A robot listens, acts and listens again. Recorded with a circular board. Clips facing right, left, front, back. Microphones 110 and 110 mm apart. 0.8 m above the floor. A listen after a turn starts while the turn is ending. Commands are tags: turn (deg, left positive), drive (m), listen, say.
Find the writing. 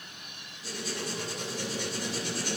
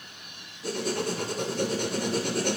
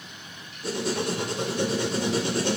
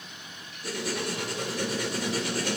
<turn deg="60"/>
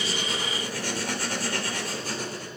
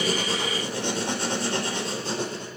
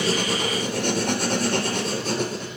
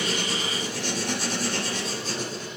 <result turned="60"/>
<turn deg="25"/>
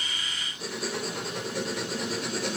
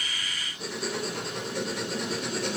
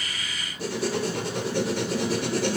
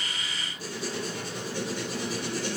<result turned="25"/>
<say>Facing the writing.</say>